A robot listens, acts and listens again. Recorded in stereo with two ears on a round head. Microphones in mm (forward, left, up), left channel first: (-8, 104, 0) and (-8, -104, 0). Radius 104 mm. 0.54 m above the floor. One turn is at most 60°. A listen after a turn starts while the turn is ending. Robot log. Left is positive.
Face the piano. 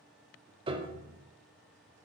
note: The piano: about 20° right or 160° right.
cmd yaw -20
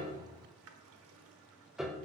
end: Found it: a piano, straight ahead, under 1 m away.